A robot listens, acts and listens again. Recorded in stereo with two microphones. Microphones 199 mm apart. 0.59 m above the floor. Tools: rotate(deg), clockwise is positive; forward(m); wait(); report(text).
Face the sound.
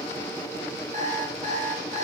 rotate(40)
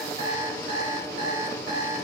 rotate(100)
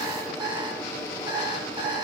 rotate(25)
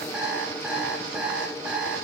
report("Found it: an alarm clock, straight ahead.")